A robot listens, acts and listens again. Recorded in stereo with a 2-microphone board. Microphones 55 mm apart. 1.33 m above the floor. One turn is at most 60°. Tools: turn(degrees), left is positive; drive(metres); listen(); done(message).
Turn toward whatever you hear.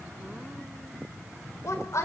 turn(degrees=60)
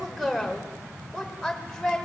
done("Facing the woman speaking.")